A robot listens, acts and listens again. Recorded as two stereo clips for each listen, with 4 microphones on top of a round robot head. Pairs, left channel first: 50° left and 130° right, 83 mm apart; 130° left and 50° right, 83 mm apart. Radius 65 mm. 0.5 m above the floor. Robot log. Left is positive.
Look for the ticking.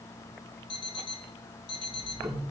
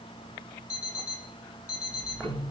note: The ticking: 170° right.
cmd yaw -170
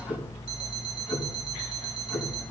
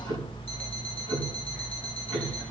note: The ticking is now 50° right.
cmd yaw -50
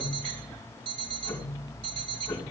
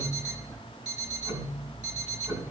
note: The ticking is now 15° right.
cmd yaw -15
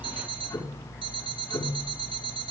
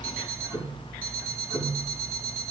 end: Facing the ticking, 2 to 4 m away.